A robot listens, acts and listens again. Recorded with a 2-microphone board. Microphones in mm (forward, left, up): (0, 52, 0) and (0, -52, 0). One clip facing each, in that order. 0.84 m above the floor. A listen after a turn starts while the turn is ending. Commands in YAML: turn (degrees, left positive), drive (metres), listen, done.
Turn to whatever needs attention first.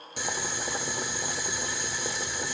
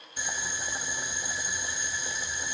listen: true
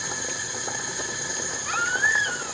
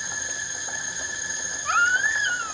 turn: -45
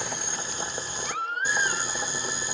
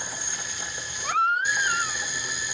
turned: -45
turn: -85
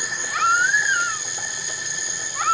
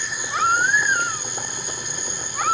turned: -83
done: "Facing the baby crying."